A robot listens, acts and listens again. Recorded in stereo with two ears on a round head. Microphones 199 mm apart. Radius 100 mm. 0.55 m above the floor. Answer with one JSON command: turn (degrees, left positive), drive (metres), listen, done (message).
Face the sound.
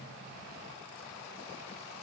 {"listen": true}
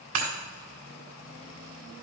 {"turn": -65}
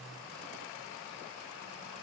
{"listen": true}
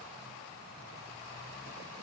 {"done": "I heard breaking glass, but can't make it out now. It was about straight ahead or 50° right."}